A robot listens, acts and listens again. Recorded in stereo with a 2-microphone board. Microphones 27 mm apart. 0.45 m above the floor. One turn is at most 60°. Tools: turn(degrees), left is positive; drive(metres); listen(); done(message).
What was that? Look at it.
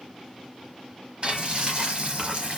turn(degrees=-45)
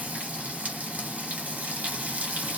turn(degrees=-60)
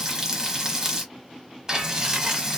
turn(degrees=-20)
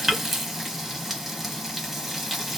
done("Facing the frying.")